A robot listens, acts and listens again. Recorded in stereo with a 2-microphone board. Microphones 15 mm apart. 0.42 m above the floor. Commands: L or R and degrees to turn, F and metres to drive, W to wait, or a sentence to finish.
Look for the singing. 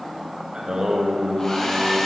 R60
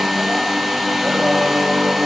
R55
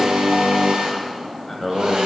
L10
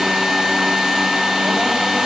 W
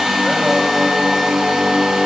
Found it: singing, straight ahead, under 1 m away.